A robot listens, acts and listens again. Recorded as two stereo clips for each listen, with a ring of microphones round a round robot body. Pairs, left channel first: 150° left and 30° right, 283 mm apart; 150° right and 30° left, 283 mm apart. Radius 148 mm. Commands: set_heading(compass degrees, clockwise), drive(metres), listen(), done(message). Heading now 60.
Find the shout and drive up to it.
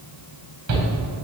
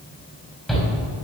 set_heading(120)
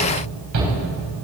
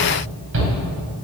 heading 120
set_heading(135)
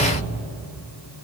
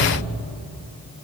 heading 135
listen()
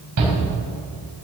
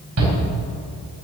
drive(1.0)
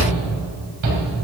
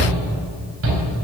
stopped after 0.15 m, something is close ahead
set_heading(145)
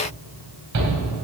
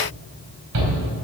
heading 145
done("Blocked. The shout is further on, straight ahead.")